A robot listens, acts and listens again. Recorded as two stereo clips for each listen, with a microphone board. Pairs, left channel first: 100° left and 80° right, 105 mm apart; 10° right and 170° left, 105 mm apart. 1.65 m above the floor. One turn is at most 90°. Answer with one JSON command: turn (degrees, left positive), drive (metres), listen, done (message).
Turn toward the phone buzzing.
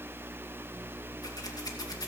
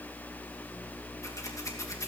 {"listen": true}
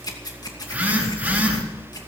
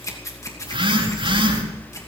{"turn": -90}
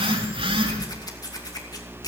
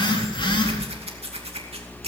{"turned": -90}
{"turn": -50}
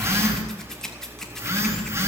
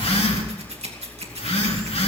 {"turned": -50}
{"turn": -15}
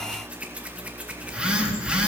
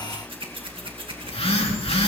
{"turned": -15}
{"done": "Facing the phone buzzing, over 4 m away."}